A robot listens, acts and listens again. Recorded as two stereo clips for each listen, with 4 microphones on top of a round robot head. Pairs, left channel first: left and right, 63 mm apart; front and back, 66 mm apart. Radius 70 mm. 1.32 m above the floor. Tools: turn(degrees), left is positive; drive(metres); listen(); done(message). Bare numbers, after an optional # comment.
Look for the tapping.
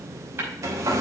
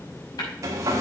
# The tapping: 40° right.
turn(-40)
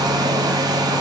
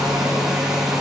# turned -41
listen()
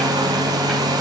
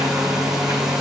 listen()
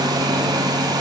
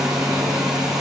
done("I heard tapping from this way, but can't make it out now.")